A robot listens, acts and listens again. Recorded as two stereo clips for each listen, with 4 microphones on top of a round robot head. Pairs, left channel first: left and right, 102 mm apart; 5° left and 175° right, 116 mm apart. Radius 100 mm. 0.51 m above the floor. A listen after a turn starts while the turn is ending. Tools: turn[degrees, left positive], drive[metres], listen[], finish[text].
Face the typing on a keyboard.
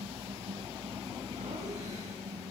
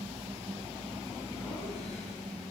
Action: listen[]
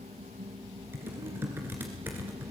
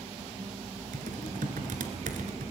Thought: The typing on a keyboard: 165° right.
Action: turn[-165]
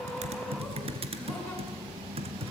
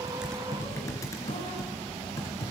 Thought: The typing on a keyboard is now 65° right.
Action: turn[-65]
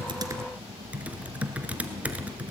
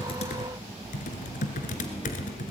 Thought: The typing on a keyboard is now 15° right.
Action: turn[-15]
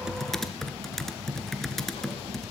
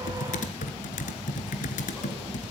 Action: finish[Facing the typing on a keyboard, 1 to 2 m away.]